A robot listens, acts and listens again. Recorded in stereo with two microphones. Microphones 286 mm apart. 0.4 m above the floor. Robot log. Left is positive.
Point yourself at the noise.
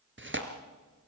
note: The tearing paper: about 40° right or 140° right.
cmd yaw -40
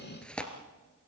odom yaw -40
end: Found it: tearing paper, straight ahead.